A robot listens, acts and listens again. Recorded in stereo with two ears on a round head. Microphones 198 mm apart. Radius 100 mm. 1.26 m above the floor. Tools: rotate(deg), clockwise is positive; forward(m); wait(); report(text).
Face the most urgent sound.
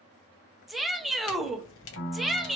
rotate(-30)
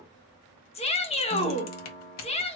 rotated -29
rotate(-150)
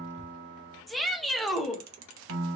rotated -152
report("Found it: a shout, straight ahead.")